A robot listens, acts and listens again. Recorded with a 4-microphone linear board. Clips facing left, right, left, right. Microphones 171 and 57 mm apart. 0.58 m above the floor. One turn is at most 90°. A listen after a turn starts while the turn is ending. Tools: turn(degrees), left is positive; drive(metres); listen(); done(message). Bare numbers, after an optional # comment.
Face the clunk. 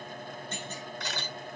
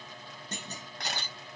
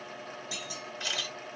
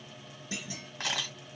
# The clunk: about 35° right or 145° right.
turn(-35)
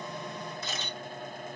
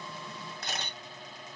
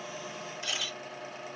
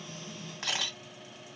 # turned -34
listen()
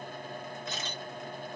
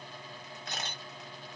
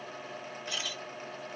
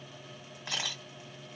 done("I heard a clunk, but can't make it out now. It was about 5° right or 110° right.")